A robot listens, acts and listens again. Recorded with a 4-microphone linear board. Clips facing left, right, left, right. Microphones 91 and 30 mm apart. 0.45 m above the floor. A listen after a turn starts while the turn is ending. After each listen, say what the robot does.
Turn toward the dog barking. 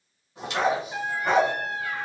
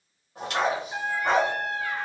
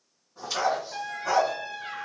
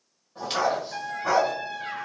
Turn 30° right.
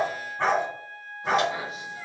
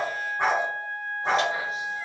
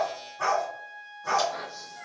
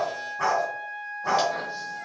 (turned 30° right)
Turn 25° right.
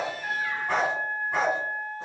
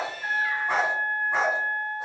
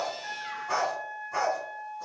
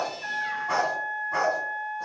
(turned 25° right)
Turn 25° right.
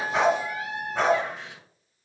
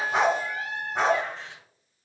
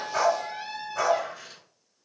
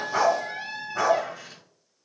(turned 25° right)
Turn 15° right.
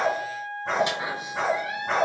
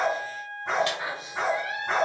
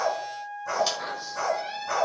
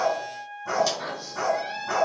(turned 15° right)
Facing the dog barking, 1 to 2 m away.